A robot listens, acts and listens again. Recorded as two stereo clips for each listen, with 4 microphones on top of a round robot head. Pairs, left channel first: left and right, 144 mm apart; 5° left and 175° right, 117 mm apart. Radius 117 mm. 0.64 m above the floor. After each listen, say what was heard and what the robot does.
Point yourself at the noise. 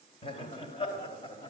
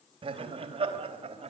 The laughter: 150° left. Turn 150° left.
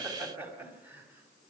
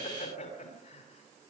The laughter is now 15° right. Turn 15° right.
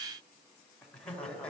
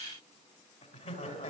The laughter is now 10° left. Turn 10° left.
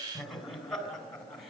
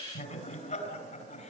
Facing the laughter.